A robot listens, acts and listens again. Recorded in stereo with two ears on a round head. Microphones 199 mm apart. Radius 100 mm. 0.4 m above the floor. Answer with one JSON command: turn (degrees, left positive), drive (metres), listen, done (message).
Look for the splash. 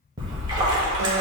{"turn": -20}
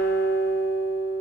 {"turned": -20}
{"listen": true}
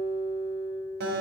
{"done": "I heard a splash, but can't make it out now. It was about straight ahead or 140° right."}